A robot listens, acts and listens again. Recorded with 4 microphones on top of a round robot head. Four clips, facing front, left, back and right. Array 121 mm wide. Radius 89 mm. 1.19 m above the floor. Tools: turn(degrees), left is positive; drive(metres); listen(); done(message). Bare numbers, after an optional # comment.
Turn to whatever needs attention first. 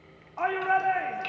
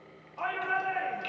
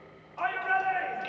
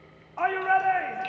# The shout: 55° right.
turn(-55)
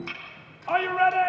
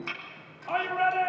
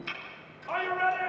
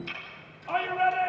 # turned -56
done("Facing the shout, 2 to 4 m away.")